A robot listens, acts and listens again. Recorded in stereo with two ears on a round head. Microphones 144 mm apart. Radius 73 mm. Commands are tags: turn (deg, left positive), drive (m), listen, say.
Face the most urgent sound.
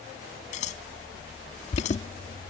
<turn deg="40"/>
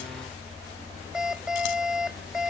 <say>Found it: an alarm, straight ahead.</say>